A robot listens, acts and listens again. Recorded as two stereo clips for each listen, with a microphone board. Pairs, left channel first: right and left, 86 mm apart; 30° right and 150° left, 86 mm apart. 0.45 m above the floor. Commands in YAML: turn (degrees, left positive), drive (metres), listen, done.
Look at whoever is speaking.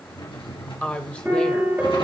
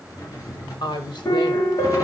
turn: -15
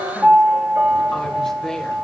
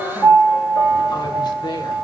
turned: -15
done: "Found it: a woman speaking, straight ahead."